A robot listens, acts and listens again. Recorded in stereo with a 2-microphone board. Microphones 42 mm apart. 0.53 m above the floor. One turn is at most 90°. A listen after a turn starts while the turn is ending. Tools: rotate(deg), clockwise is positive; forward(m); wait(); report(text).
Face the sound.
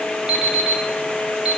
rotate(20)
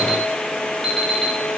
report("Found it: an alarm clock, straight ahead.")